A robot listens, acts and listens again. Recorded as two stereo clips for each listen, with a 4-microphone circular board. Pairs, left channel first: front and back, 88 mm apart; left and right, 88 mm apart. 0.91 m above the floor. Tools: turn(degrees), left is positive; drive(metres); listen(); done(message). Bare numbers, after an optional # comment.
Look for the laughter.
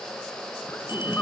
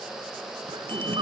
# The laughter: 70° right.
turn(-70)
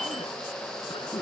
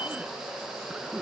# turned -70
done("Found it: laughter, straight ahead.")